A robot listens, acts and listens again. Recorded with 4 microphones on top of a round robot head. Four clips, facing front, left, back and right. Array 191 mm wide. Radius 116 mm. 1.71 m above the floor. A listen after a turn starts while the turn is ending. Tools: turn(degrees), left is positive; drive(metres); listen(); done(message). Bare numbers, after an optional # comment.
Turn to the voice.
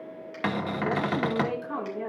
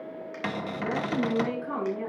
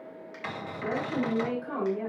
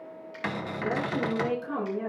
# The woman speaking: 120° left.
turn(120)
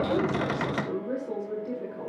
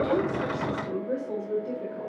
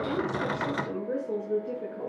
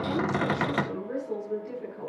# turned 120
# The woman speaking is now 35° left.
turn(35)
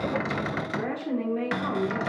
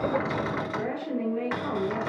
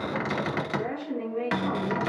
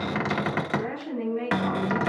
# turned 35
done("Facing the woman speaking, over 4 m away.")